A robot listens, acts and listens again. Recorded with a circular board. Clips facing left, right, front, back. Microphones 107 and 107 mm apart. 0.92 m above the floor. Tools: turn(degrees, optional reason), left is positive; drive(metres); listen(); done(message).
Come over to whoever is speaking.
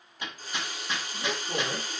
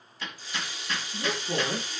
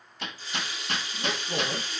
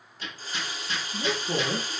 turn(degrees=-155, reason="The woman speaking: 155° right.")
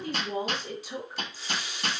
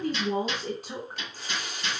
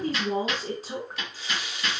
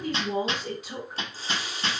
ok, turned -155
turn(degrees=-55, reason="The woman speaking is now 55° right.")
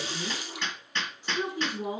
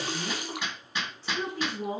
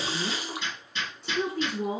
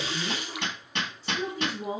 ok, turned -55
turn(degrees=15, reason="The woman speaking is now 15° left.")
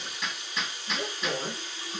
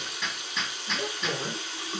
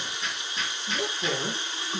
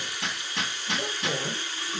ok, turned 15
drive(metres=1.0)
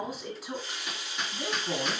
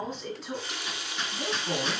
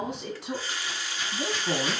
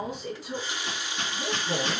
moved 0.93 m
drive(metres=1.0)
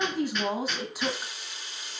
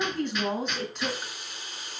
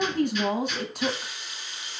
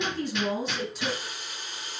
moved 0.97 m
turn(degrees=10, reason="The woman speaking is now 10° left.")
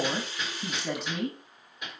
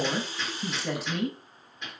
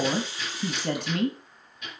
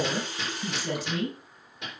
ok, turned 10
drive(metres=1.0)
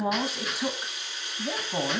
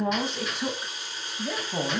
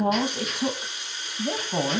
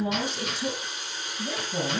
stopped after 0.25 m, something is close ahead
done("I am next to the woman speaking.")